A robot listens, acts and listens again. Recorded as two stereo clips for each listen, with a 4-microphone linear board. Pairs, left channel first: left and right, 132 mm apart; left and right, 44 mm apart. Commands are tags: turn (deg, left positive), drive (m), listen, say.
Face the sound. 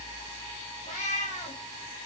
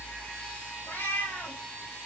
<turn deg="65"/>
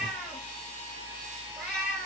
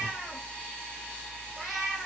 <say>Found it: a cat meowing, straight ahead.</say>